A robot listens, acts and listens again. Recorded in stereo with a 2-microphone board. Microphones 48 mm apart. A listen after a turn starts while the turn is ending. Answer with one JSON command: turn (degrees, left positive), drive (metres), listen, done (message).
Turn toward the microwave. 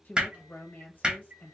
{"turn": -35}
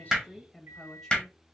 {"turn": -105}
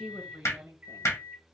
{"turn": -35}
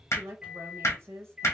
{"turn": -15}
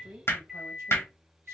{"done": "Facing the microwave."}